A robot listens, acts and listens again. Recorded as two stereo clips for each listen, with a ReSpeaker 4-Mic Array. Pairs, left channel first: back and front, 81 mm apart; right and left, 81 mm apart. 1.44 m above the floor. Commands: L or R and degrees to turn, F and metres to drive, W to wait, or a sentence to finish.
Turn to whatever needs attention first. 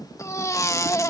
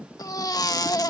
R130
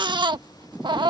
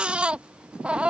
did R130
L15
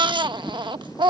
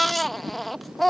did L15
Found it: a baby crying, straight ahead.